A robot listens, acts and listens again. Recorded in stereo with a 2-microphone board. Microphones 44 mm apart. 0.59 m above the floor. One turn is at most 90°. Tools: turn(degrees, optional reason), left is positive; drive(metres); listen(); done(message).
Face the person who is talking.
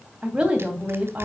turn(degrees=-20, reason="The woman speaking: about 20° right or 160° right.")
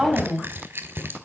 done("Found it: a woman speaking, straight ahead, 2 to 4 m away.")